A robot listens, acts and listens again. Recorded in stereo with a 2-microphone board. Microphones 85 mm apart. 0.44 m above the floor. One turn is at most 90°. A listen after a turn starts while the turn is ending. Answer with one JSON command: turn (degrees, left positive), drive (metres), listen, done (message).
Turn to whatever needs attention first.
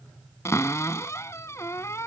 {"listen": true}
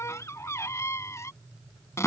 {"listen": true}
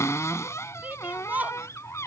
{"turn": -20}
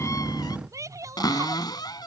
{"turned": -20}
{"turn": -90}
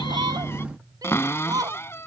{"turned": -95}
{"turn": -45}
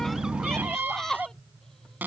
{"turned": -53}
{"done": "Found it: a shout, straight ahead."}